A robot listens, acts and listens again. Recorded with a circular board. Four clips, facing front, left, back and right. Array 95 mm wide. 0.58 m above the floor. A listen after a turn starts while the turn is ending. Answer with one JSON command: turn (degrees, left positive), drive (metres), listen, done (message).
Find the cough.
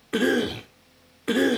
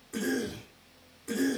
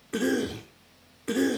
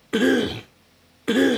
{"turn": -65}
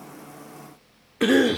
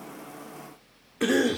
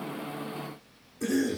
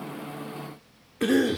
{"turn": 10}
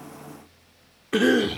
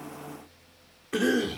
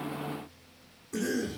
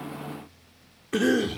{"done": "Facing the cough."}